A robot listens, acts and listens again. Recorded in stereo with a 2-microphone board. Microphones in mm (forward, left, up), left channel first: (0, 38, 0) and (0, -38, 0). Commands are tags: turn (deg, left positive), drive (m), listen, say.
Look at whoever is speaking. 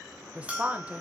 <turn deg="-20"/>
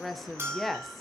<say>Facing the woman speaking.</say>